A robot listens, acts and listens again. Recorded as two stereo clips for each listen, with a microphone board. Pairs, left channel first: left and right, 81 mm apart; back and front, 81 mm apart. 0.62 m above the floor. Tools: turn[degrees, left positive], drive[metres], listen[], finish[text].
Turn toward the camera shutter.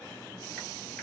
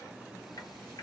Action: listen[]
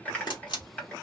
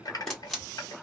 Thought: The camera shutter: 100° left.
Action: turn[100]
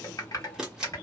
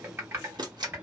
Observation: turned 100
Thought: The camera shutter is now 10° right.
Action: turn[-10]
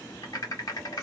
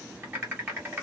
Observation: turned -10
Action: listen[]
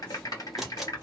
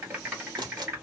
Action: finish[Found it: a camera shutter, straight ahead, 1 to 2 m away.]